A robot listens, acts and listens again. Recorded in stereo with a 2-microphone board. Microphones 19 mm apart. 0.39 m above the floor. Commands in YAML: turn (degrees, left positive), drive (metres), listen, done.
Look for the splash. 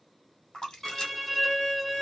turn: 45
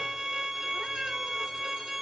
listen: true
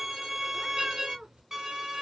done: "I heard a splash, but can't make it out now. It was about straight ahead or 90° left."